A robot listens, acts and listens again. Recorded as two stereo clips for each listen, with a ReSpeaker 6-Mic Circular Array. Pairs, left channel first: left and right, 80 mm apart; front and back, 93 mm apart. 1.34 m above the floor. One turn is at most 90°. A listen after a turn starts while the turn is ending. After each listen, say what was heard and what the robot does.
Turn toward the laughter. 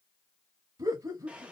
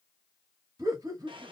The laughter: 130° right. Turn 90° right.
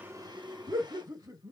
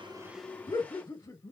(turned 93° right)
The laughter is now 50° right. Turn 50° right.
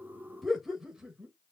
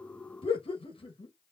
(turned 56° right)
Facing the laughter, 1 to 2 m away.